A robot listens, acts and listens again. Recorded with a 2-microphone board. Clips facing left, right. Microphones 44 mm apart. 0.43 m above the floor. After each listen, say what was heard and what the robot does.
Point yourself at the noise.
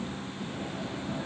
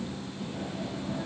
Keep listening.
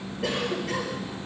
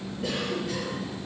Turn 90° left.
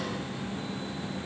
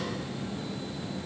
Keep listening.
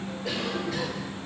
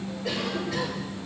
Found it: a cough, straight ahead, over 4 m away.